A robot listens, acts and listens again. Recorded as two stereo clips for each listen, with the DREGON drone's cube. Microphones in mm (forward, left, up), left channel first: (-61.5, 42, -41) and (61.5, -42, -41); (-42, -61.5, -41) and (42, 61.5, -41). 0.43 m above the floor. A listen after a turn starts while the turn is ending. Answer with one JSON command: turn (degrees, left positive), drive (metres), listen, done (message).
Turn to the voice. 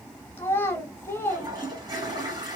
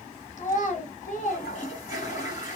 {"turn": -140}
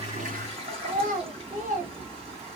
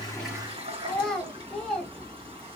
{"turn": -35}
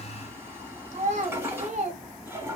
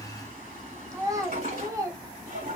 {"turn": -10}
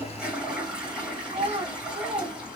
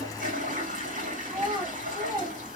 {"done": "Found it: a child speaking, straight ahead, 1 to 2 m away."}